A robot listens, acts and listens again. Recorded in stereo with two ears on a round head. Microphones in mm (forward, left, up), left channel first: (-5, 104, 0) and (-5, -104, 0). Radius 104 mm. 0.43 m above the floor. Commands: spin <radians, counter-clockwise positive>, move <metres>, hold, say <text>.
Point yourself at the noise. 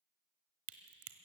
spin -1.13
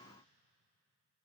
hold
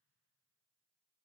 say I heard a crack, but can't make it out now. It was about straight ahead or 50° right.